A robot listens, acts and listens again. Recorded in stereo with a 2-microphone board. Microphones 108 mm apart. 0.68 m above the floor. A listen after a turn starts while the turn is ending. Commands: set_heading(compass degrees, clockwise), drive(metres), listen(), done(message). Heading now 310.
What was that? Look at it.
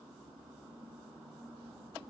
listen()
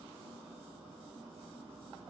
listen()
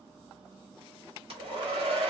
set_heading(10)
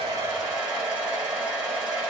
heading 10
set_heading(20)
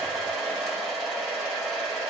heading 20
done("Found it: a hair dryer, straight ahead.")